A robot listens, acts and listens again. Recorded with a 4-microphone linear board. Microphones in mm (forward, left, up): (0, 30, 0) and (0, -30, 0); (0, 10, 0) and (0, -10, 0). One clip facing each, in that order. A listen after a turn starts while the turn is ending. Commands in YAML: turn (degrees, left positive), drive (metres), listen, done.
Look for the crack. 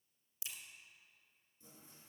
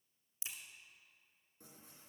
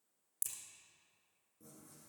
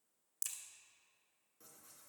turn: -30
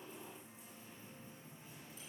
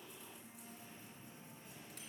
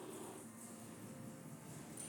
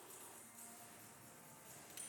listen: true
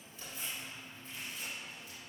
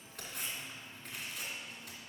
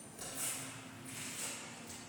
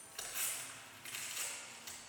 done: "I heard a crack, but can't make it out now. It was about straight ahead or 120° right."